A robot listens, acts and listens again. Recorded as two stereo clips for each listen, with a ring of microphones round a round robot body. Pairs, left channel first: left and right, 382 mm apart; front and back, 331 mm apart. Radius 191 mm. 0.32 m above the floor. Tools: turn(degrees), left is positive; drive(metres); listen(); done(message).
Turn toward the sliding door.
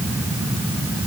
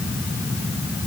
listen()
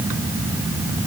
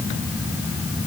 listen()
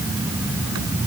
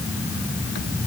done("I can't make out a sliding door.")